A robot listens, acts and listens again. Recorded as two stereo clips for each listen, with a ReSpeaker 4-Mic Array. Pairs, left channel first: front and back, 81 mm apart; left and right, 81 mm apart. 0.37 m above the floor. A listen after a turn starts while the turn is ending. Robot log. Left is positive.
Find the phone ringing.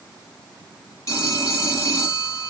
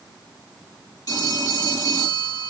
note: The phone ringing: 55° left.
cmd yaw +55
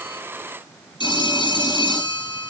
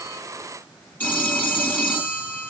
note: The phone ringing is now 20° left.
cmd yaw +20
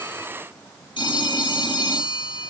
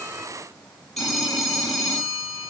end: Found it: a phone ringing, straight ahead, over 4 m away.